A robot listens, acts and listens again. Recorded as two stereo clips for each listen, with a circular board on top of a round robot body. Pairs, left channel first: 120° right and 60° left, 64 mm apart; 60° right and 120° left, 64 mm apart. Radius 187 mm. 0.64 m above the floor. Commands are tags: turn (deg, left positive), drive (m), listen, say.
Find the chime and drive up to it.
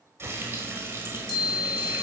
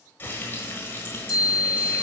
<turn deg="-100"/>
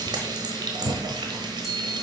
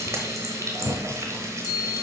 <turn deg="-30"/>
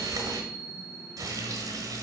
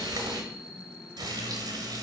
<drive m="1.0"/>
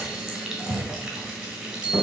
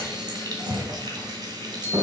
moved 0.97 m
<turn deg="-10"/>
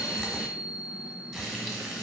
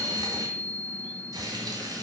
<drive m="1.0"/>
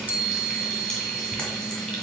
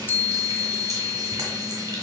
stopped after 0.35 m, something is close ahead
<say>I am next to the chime.</say>